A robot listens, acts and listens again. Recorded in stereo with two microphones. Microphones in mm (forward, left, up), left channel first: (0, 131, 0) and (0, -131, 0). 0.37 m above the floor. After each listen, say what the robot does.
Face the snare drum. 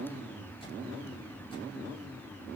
Keep listening.
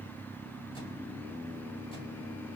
Keep listening.
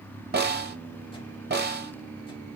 Turn 40° right.
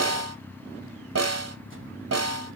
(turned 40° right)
Turn 100° right.
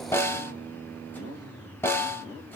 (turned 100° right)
Turn 10° left.
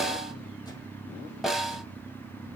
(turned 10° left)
Found it: a snare drum, straight ahead.